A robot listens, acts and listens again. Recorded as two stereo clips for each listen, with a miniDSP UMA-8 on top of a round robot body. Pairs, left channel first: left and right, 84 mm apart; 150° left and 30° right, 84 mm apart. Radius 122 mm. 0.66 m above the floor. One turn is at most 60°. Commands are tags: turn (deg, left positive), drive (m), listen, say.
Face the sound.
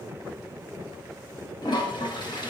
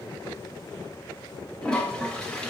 <turn deg="60"/>
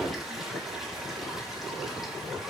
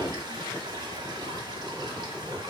<turn deg="15"/>
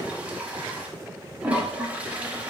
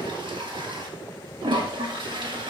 <turn deg="-20"/>
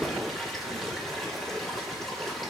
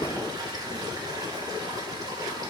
<say>Found it: a toilet flushing, straight ahead.</say>